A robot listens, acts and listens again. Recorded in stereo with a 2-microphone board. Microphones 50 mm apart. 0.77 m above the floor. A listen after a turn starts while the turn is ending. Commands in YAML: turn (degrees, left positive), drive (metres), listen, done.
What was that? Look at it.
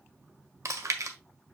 turn: -90
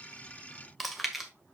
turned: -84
done: "Found it: chewing, straight ahead, 1 to 2 m away."